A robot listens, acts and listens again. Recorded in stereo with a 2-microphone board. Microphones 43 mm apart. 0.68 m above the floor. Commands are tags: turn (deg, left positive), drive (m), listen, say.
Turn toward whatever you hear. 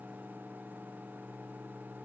<listen/>
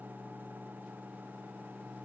<listen/>
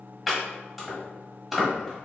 <turn deg="30"/>
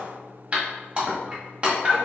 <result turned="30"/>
<turn deg="-30"/>
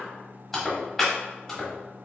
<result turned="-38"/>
<say>Found it: chopping, straight ahead.</say>